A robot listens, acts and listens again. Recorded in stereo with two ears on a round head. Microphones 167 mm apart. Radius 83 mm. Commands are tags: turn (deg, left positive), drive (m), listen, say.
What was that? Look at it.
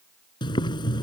<turn deg="25"/>
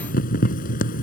<turn deg="130"/>
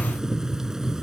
<say>Facing the boiling.</say>